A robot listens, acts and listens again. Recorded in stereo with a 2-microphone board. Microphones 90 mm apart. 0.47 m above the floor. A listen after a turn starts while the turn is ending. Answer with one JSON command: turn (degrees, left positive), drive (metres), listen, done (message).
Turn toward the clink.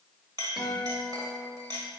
{"turn": -50}
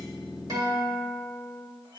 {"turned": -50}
{"listen": true}
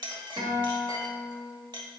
{"turn": -75}
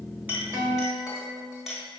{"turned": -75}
{"done": "Facing the clink."}